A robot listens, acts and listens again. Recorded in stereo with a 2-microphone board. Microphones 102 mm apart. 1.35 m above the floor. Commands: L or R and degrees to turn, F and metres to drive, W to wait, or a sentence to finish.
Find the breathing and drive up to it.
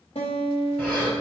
L20
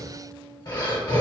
L135
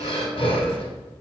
L65
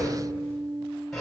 F1.0
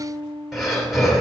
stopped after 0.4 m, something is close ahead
Blocked. The breathing is further on, straight ahead.